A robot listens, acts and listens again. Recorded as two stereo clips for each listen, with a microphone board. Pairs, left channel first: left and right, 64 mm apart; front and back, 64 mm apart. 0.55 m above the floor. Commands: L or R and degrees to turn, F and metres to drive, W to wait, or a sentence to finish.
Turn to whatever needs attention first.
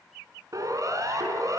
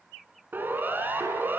R120
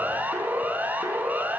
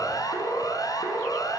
R25
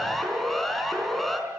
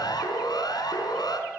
Found it: a siren, straight ahead.